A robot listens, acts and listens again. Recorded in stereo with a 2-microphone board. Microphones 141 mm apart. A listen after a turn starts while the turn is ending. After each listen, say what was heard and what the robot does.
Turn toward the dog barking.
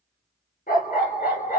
Turn 90° left.
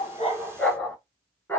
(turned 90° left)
So it is at 15° left. Turn 15° left.
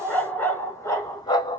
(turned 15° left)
The dog barking is now 35° left. Turn 35° left.
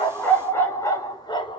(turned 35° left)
The dog barking is now 35° left. Turn 35° left.
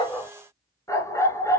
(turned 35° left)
The dog barking is now 25° left. Turn 25° left.
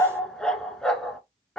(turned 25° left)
Found it: a dog barking, straight ahead.